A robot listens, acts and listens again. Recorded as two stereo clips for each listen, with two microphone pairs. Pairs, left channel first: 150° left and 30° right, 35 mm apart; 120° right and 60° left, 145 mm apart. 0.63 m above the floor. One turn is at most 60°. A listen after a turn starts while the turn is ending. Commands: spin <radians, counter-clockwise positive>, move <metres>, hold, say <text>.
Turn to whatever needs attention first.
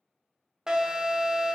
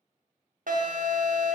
spin 0.79
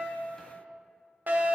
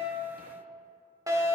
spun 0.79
say Facing the alarm.